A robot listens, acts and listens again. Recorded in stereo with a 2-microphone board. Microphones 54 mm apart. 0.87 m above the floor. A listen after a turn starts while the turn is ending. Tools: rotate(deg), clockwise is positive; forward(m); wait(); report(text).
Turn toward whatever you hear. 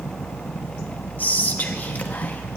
rotate(-30)
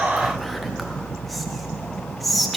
report("Facing the whispering.")